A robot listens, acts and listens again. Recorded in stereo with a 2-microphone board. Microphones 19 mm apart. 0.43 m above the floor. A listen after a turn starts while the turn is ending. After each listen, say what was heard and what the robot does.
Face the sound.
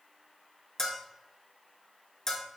The bell: about 25° left or 155° left. Turn 25° left.
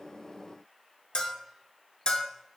So it is at 130° left. Turn 130° left.
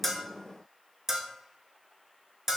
The bell is now 25° right. Turn 25° right.
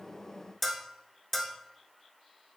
The bell is now 15° left. Turn 15° left.
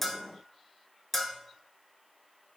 Found it: a bell, straight ahead, under 1 m away.